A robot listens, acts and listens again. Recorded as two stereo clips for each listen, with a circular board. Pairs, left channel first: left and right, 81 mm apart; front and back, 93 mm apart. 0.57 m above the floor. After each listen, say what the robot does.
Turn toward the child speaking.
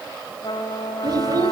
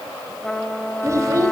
Turn 130° right.
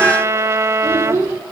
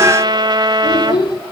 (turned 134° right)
Turn 35° right.
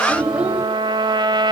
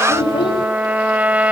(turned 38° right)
Turn 15° right.
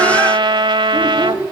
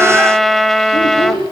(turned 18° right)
Turn 20° right.
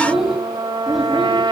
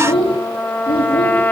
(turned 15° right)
Found it: a child speaking, straight ahead, 2 to 4 m away.